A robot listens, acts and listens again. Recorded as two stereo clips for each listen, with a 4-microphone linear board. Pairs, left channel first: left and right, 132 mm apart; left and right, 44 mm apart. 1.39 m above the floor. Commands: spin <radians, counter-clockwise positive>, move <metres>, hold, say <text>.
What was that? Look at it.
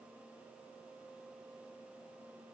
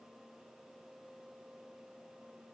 hold
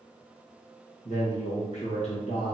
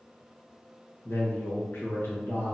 spin 0.87
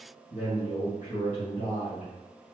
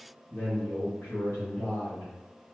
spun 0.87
spin 1.31
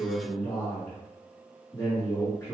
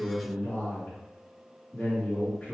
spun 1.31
spin 0.35
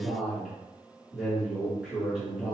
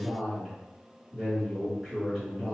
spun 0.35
say Facing the man speaking, 1 to 2 m away.